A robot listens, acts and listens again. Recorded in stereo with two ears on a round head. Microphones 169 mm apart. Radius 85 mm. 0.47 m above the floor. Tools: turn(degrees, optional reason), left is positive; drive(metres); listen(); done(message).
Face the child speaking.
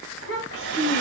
turn(degrees=70, reason="The child speaking: about 70° left or 110° left.")
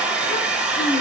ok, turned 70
listen()
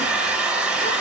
listen()
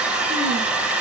done("I heard a child speaking, but can't make it out now. It was about straight ahead or 40° left.")